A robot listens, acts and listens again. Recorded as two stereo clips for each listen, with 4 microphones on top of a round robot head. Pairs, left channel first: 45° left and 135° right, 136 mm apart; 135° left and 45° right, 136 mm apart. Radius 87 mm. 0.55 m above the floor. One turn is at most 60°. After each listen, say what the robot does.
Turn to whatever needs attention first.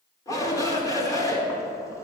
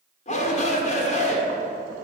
Turn 60° left.
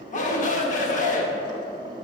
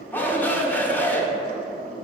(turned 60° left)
Turn 60° left.
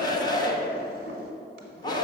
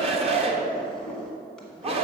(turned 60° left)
Turn 10° right.
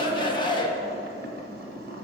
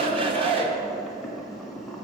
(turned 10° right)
Facing the shout, 1 to 2 m away.